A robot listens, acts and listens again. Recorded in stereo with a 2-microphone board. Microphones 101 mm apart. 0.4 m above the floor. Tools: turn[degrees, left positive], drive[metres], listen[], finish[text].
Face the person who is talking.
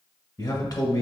Thought: The man speaking: about 40° left or 140° left.
Action: turn[40]
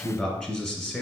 Thought: So it is at 10° left.
Action: turn[10]
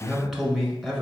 Action: finish[Found it: a man speaking, straight ahead, 1 to 2 m away.]